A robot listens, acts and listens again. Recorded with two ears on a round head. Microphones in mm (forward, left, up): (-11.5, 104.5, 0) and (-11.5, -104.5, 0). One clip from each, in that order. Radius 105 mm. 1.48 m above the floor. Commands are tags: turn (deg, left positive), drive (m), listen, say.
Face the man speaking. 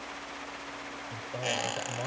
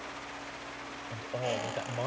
<turn deg="-30"/>
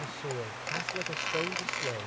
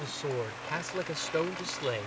<turn deg="-140"/>
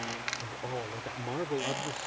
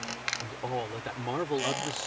<turn deg="-30"/>
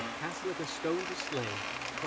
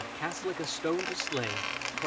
<turn deg="-20"/>
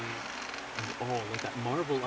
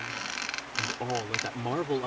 <say>Facing the man speaking.</say>